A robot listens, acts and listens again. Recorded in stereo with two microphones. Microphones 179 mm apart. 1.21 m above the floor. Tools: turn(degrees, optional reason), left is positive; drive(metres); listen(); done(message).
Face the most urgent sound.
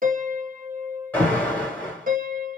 turn(degrees=30)
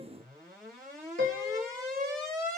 turn(degrees=-20, reason="So it is at 20° right.")
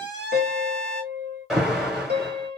done("Facing the alarm, 2 to 4 m away.")